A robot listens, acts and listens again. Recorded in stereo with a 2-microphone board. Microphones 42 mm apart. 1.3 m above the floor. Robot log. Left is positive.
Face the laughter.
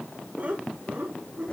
note: The laughter: about 35° right or 145° right.
cmd yaw -35
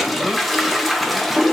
cmd idle
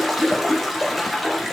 cmd idle
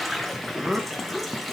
end: Facing the laughter, 1 to 2 m away.